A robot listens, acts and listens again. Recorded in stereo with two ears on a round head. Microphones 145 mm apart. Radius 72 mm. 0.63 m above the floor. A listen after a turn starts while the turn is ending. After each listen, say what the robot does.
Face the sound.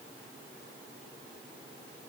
Keep listening.
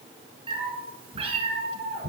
Turn 40° right.
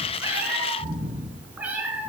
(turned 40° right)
Turn 10° right.
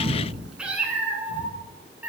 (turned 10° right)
Turn 10° right.
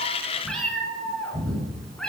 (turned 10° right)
Facing the cat meowing, 2 to 4 m away.